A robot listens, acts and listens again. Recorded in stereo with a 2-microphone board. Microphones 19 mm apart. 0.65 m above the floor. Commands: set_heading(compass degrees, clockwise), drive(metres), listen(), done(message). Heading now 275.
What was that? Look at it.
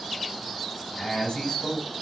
set_heading(205)
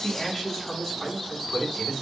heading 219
set_heading(194)
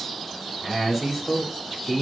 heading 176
set_heading(186)
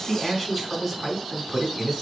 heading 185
done("Found it: a man speaking, straight ahead, over 4 m away.")